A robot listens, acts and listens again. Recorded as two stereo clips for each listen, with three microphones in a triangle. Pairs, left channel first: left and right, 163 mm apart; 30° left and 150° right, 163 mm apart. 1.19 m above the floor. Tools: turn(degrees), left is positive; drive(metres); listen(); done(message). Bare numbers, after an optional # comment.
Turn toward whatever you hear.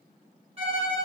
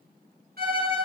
# The violin: 145° right.
turn(-145)
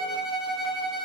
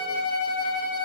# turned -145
done("Facing the violin.")